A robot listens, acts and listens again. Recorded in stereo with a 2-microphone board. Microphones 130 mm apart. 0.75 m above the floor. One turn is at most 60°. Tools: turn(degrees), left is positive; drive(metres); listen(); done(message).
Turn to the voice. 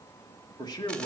turn(degrees=30)
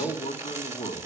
turn(degrees=60)
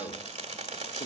turn(degrees=60)
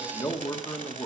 turn(degrees=35)
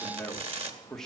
done("Found it: a man speaking, straight ahead.")